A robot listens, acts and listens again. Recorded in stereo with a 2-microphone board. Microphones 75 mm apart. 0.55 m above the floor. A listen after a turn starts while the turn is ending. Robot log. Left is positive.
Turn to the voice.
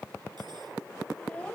note: The child speaking: about 15° left or 165° left.
cmd yaw +15
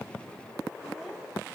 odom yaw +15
cmd idle
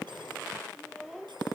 end: Facing the child speaking.